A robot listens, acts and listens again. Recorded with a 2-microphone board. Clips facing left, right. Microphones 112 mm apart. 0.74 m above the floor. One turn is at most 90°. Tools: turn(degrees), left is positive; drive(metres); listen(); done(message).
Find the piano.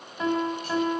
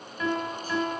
turn(degrees=25)
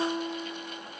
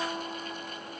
done("Found it: a piano, straight ahead, 2 to 4 m away.")